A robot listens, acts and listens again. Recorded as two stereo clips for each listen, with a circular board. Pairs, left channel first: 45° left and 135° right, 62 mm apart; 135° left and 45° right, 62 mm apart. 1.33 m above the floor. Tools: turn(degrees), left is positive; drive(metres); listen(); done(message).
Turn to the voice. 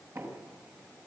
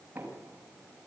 listen()
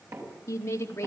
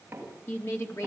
turn(degrees=90)
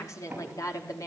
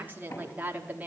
turn(degrees=20)
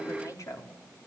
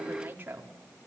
turn(degrees=15)
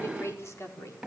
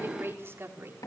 done("Facing the woman speaking.")